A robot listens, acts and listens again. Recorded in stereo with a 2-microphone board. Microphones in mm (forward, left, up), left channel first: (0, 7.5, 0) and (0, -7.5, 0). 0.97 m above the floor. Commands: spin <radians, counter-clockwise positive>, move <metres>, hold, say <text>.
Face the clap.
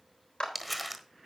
spin 1.57
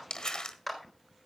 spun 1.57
say Facing the clap.